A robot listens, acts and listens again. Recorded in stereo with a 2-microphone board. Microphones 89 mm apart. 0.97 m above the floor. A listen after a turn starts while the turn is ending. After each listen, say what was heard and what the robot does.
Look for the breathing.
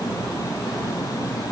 Keep listening.
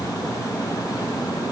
Keep listening.
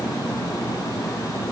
I can't make out breathing.